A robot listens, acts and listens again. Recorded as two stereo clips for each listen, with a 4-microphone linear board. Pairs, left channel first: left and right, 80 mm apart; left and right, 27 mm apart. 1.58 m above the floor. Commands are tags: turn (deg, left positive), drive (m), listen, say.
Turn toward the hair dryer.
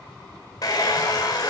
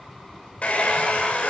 <turn deg="50"/>
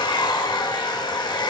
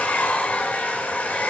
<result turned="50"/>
<turn deg="80"/>
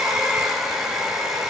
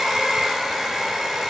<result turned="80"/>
<say>Found it: a hair dryer, straight ahead, 1 to 2 m away.</say>